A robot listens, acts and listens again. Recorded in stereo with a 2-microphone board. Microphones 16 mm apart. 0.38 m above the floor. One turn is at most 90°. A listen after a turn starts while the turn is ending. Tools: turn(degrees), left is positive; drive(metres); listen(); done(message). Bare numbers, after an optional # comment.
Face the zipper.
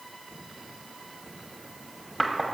listen()
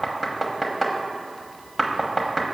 listen()
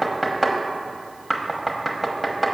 done("I can't make out a zipper, only knocking.")